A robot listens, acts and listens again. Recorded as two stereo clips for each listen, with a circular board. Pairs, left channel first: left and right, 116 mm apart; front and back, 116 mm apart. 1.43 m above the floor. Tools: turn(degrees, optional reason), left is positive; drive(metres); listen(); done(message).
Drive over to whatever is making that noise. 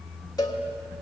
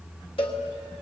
turn(degrees=35, reason="The cowbell: 35° left.")
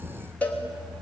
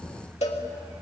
turn(degrees=15, reason="The cowbell is now 15° left.")
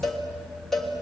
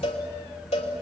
drive(metres=1.0)
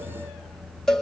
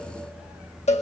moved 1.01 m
drive(metres=1.0)
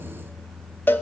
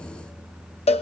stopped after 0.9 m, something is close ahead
turn(degrees=20, reason="The cowbell is now 20° left.")
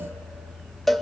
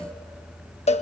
done("I am next to the cowbell.")